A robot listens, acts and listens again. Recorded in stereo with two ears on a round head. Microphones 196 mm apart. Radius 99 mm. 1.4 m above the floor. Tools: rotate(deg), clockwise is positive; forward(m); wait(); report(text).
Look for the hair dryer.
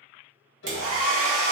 rotate(70)
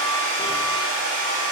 rotate(35)
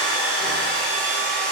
report("Facing the hair dryer.")